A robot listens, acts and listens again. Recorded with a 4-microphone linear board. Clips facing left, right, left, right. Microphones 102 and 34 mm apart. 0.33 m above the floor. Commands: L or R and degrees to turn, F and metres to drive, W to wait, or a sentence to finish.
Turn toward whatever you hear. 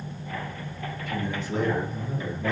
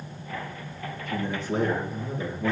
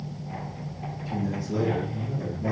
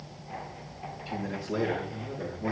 R30
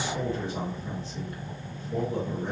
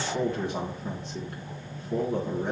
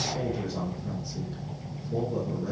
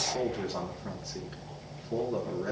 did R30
R120
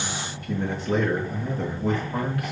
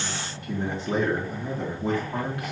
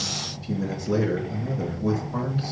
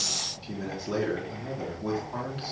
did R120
R25
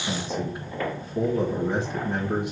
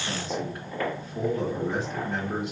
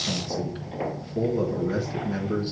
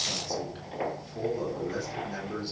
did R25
L10
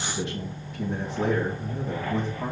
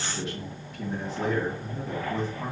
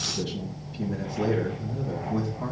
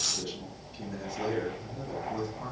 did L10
Facing the man speaking, 2 to 4 m away.